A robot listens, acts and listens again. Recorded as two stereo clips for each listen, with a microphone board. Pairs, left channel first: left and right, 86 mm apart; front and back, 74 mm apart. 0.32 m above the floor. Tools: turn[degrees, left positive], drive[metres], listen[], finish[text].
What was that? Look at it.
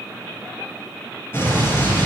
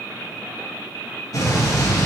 Thought: The explosion: 30° left.
Action: turn[30]
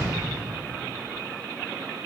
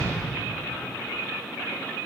Action: finish[Facing where the explosion came from. I can't hear it now.]